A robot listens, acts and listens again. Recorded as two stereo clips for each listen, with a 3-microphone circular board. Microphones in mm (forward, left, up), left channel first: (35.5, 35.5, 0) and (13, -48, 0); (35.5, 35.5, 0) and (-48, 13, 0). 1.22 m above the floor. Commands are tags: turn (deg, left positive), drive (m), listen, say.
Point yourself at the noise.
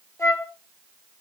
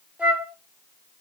<turn deg="125"/>
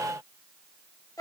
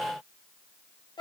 <turn deg="35"/>
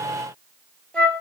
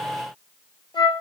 <say>Found it: a flute, straight ahead.</say>